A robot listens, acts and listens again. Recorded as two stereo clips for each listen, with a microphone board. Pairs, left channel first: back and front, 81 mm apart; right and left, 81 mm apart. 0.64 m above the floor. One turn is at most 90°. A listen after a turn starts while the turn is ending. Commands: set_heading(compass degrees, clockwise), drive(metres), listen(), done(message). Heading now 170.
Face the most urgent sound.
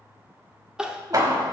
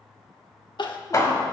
set_heading(250)
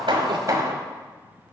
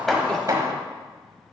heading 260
set_heading(250)
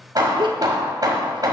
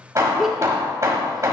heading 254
done("Facing the crying.")